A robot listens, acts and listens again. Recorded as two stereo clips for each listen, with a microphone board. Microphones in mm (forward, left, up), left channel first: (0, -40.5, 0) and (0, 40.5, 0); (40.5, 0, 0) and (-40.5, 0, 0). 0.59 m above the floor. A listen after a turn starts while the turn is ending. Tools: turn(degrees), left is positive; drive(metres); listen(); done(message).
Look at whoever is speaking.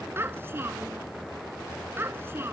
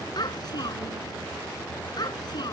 turn(degrees=30)
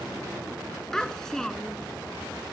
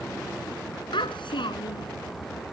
done("Found it: a child speaking, straight ahead.")